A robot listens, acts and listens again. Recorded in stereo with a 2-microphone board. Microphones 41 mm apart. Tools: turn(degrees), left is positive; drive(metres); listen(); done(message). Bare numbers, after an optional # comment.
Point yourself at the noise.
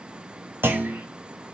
# The clunk: about 65° right or 115° right.
turn(-65)
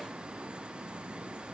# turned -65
listen()
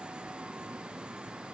done("I heard a clunk, but can't make it out now. It was about straight ahead or 50° right.")